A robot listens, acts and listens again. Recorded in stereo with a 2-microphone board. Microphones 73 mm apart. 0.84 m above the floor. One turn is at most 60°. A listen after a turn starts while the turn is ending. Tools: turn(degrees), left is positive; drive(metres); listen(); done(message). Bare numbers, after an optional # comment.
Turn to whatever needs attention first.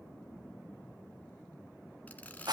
listen()
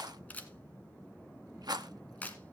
listen()
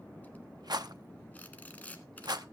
done("I can't make out anything urgent to turn to.")